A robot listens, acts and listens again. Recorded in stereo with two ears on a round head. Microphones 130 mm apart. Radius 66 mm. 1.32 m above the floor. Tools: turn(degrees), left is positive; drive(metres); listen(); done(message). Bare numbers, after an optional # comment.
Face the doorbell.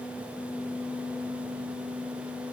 listen()
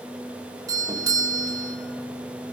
# The doorbell: about 25° right or 155° right.
turn(-25)
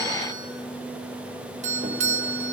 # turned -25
# So it is at 125° right.
turn(-125)
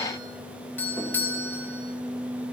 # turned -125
# The doorbell is now 15° left.
turn(15)
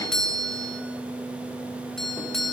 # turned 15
done("Found it: a doorbell, straight ahead, 2 to 4 m away.")